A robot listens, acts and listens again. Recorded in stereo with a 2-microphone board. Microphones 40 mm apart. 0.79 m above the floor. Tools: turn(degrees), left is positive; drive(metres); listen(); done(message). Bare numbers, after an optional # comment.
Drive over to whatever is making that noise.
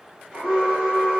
# The alarm: about 15° right or 165° right.
turn(-15)
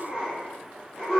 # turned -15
drive(1.0)
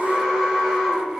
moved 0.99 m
# The alarm is now 10° right.
turn(-10)
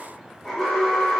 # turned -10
drive(1.0)
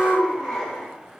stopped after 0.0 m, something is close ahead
done("I am next to the alarm.")